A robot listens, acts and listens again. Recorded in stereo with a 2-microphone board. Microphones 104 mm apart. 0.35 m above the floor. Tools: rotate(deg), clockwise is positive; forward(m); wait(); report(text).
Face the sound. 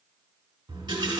rotate(50)
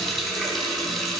report("Found it: a running tap, straight ahead.")